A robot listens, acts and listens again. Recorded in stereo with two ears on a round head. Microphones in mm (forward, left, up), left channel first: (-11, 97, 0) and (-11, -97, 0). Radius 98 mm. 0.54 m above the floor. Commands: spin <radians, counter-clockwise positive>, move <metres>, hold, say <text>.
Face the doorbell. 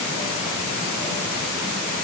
hold
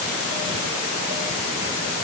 hold
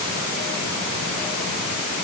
say I can't make out a doorbell.